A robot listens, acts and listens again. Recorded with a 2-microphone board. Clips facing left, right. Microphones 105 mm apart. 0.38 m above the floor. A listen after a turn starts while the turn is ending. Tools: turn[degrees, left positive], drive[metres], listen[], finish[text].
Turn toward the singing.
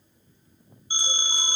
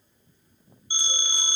Action: listen[]
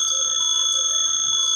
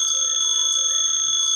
Action: listen[]
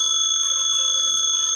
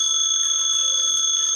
Action: finish[I can't make out singing, only a phone ringing.]